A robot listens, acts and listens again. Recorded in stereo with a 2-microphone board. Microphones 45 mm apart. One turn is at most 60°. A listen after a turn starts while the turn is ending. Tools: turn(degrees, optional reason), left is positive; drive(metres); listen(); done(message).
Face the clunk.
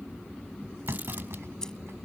turn(degrees=-60)
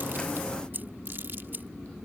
turn(degrees=-30, reason="Nothing new. It was at 30° right.")
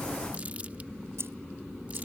done("I heard a clunk from this way, but can't make it out now.")